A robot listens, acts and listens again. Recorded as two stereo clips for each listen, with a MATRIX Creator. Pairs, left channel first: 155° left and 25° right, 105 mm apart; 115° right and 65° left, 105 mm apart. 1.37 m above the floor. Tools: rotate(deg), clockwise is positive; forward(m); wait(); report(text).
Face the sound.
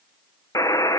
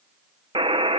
rotate(-100)
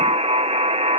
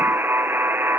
report("Found it: a buzzer, straight ahead.")